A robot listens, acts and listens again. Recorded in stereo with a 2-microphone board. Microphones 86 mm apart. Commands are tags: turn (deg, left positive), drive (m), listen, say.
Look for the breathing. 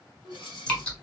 <turn deg="65"/>
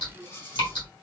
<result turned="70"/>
<turn deg="35"/>
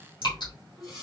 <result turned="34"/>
<say>Facing the breathing, 1 to 2 m away.</say>